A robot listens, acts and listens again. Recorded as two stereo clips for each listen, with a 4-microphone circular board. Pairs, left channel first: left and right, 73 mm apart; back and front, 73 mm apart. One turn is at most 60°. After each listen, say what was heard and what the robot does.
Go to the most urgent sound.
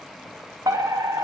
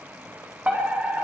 The fire alarm: 70° right. Turn 60° right.
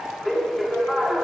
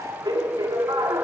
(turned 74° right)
Drive 1.0 m forward.
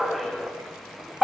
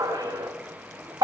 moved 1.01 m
Drive 1.0 m forward.
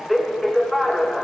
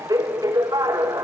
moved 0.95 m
Drive 1.0 m forward.
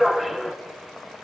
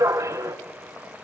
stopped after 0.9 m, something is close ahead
Arrived at the fire alarm, straight ahead.